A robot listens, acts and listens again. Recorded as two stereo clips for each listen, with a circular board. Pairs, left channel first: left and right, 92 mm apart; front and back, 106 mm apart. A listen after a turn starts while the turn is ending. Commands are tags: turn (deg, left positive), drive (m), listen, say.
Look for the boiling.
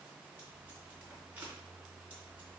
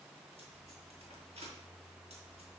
<listen/>
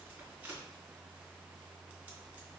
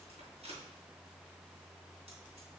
<listen/>
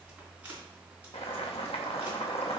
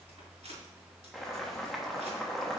<turn deg="90"/>
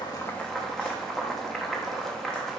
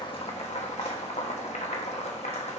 <say>Found it: boiling, straight ahead, 1 to 2 m away.</say>